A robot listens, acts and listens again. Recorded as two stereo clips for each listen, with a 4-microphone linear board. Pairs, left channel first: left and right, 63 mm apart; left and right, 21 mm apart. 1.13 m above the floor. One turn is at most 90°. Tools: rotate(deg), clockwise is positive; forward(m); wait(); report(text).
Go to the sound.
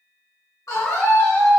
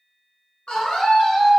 rotate(-65)
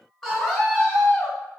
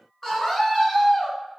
rotate(-10)
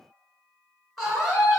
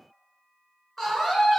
forward(1.0)
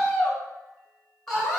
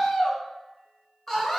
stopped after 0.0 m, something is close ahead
rotate(-10)
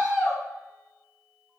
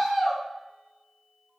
report("Something is in my way. I am facing the scream but have not reached it.")